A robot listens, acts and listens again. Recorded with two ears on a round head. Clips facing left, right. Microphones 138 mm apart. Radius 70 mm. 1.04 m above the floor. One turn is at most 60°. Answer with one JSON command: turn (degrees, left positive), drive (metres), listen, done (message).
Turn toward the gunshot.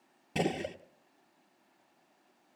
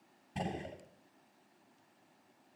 {"turn": 60}
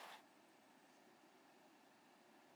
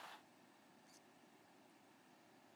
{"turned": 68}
{"listen": true}
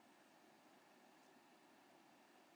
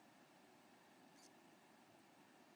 {"done": "I heard a gunshot, but can't make it out now. It was about 5° left or 40° left."}